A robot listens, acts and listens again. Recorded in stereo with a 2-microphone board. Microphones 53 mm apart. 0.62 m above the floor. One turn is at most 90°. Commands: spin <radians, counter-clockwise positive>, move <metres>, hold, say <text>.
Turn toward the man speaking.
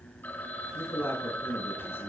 spin 0.87
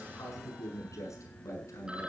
spin 1.22
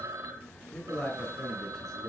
spin 0.17
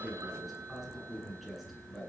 say Facing the man speaking.